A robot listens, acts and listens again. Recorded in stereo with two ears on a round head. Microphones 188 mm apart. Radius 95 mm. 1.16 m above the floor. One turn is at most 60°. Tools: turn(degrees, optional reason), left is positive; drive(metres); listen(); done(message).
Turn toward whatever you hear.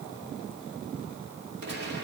turn(degrees=-50, reason="The gunshot: about 50° right or 130° right.")
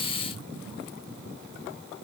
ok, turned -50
listen()
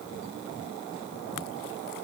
done("I heard a gunshot, but can't make it out now. It was about straight ahead or 80° right.")